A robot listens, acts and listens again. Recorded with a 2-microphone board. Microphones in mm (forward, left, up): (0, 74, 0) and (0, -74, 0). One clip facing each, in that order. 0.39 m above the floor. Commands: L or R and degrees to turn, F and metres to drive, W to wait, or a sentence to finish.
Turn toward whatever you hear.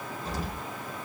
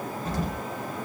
R50
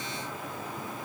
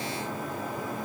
W
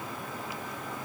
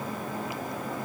I heard an explosion, but can't make it out now. It was about straight ahead or 80° right.